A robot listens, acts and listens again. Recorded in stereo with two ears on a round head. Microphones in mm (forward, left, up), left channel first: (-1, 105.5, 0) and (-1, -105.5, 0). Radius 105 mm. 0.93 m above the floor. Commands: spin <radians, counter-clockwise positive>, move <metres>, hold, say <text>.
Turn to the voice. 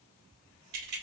hold
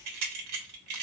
hold
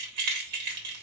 say I can't make out anyone speaking to turn to.